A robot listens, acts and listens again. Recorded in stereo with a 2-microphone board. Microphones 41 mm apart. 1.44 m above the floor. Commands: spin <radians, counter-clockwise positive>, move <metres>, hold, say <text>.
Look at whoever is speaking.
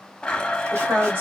spin -0.96
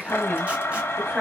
say Found it: a woman speaking, straight ahead, 2 to 4 m away.